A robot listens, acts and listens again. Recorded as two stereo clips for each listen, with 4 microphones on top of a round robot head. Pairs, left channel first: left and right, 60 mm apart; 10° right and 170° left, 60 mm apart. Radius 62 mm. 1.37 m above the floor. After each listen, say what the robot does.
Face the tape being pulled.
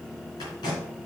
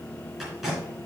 Turn 85° left.
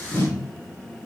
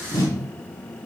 Turn 30° left.
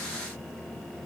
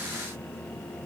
Keep listening.
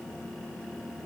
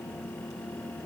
Keep listening.
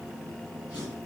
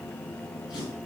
Turn 15° right.
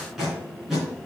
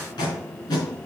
Found it: tape being pulled, straight ahead, 2 to 4 m away.